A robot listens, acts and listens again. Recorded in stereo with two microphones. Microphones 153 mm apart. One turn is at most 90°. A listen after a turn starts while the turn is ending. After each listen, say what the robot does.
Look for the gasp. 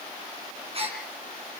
Turn 40° right.
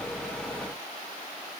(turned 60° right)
Keep listening.
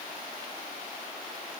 I heard a gasp, but can't make it out now. It was about 20° left or 80° right.